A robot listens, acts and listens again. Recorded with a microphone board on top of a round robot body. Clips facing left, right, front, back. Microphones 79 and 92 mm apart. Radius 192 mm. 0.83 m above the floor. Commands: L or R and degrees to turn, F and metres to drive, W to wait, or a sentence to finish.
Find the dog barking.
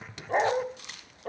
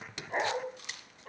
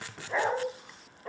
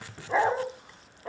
L95
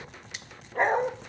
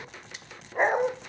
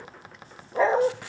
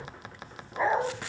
R15
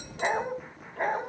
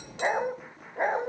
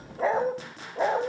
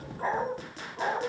R20
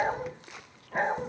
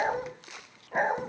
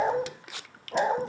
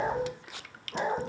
R15
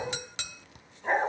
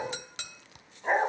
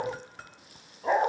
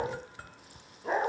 R10
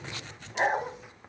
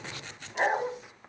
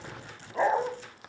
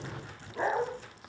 Facing the dog barking.